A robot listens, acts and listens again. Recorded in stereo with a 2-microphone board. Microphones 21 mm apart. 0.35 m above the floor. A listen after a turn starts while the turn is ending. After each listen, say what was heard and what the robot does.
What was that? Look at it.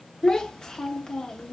The child speaking: about 30° left or 150° left. Turn 30° left.
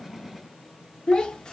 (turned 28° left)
So it is at 115° left. Turn 115° left.
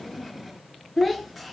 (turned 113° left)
Facing the child speaking, under 1 m away.